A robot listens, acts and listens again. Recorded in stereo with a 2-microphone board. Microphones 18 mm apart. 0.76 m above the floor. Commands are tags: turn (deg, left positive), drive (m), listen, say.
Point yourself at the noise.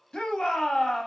<turn deg="60"/>
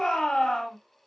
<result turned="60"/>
<turn deg="55"/>
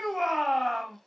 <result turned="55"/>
<say>Facing the shout, 1 to 2 m away.</say>